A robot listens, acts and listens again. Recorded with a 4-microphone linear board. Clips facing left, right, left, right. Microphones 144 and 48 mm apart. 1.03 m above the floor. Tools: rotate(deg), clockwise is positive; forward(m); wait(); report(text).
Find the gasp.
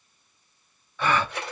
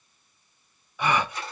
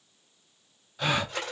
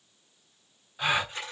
rotate(30)
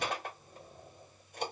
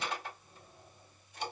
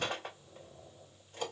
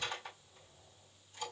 wait()
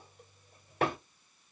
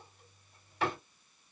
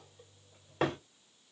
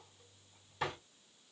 report("I heard a gasp, but can't make it out now. It was about 15° left or 135° right.")